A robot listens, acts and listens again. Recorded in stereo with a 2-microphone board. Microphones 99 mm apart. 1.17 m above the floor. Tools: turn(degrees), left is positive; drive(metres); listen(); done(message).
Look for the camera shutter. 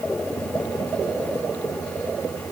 listen()
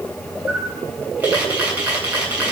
turn(degrees=-30)
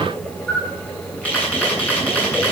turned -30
turn(degrees=15)
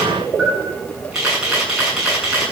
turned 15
done("Facing the camera shutter, over 4 m away.")